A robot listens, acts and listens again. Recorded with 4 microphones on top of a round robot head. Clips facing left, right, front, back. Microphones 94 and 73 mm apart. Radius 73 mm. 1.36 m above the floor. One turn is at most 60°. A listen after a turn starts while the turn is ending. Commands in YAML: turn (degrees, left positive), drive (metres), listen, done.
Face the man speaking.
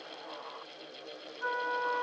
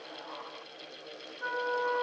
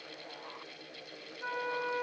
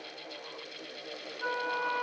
listen: true
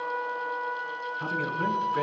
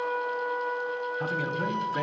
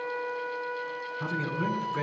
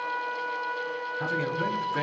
turn: -60
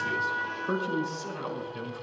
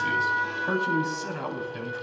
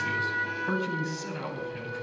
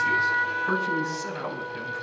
turn: -60
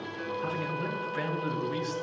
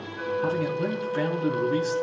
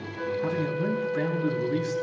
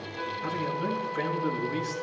turn: -35
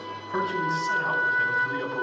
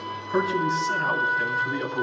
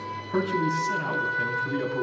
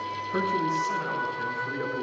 done: "Found it: a man speaking, straight ahead."